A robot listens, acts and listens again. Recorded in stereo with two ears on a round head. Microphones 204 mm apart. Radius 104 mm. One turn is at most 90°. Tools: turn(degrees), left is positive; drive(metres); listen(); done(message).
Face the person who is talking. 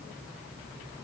listen()
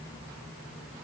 listen()
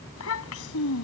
turn(degrees=65)
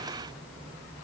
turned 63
listen()
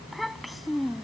done("Facing the child speaking.")